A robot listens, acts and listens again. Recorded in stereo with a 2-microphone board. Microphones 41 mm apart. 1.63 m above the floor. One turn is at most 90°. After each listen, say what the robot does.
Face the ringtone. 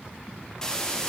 Keep listening.
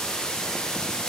Keep listening.
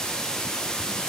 I can't make out a ringtone, only a hiss.